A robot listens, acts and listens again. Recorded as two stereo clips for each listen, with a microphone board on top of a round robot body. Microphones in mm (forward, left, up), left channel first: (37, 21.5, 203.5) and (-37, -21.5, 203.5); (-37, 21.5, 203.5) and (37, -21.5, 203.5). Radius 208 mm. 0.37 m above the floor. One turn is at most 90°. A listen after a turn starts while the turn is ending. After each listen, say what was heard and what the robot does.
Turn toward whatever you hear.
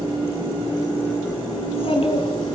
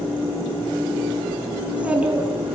The child speaking: 50° left. Turn 50° left.
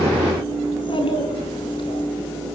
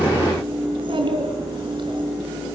Facing the child speaking.